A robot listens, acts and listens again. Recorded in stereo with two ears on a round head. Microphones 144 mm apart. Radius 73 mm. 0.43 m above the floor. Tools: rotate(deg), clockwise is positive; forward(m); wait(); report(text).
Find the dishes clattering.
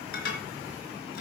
rotate(-60)
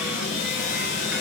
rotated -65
wait()
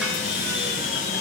wait()
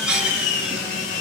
report("Found it: dishes clattering, straight ahead, 2 to 4 m away.")